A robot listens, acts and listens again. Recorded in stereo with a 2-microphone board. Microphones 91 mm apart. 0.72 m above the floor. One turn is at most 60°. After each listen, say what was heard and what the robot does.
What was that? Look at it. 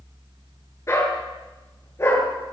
The dog barking: about 30° left or 150° left. Turn 30° left.
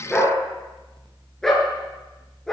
Facing the dog barking.